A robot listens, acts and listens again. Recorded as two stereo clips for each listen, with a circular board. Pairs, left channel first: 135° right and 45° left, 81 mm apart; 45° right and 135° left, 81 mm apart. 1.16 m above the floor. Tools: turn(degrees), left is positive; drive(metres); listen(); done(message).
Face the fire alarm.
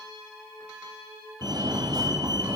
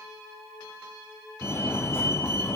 turn(degrees=15)
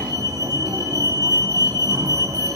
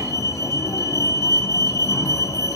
done("Found it: a fire alarm, straight ahead.")